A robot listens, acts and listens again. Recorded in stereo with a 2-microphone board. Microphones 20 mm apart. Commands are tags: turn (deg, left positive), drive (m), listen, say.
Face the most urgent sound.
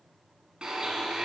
<listen/>
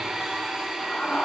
<turn deg="90"/>
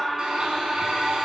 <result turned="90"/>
<say>Facing the scream, over 4 m away.</say>